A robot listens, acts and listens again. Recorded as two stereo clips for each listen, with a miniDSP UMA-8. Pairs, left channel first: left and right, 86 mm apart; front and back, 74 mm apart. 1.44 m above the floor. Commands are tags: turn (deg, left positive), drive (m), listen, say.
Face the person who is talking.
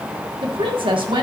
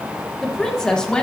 <turn deg="-75"/>
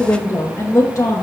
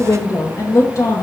<turn deg="40"/>
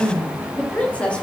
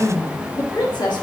<turn deg="15"/>
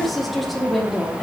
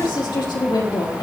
<say>Found it: a woman speaking, straight ahead, over 4 m away.</say>